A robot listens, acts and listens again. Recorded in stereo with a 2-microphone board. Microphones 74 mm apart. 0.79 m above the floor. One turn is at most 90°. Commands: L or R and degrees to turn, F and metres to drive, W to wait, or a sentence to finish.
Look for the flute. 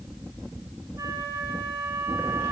R90
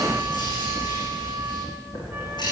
W
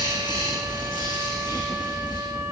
W
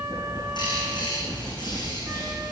Facing where the flute came from. I can't hear it now.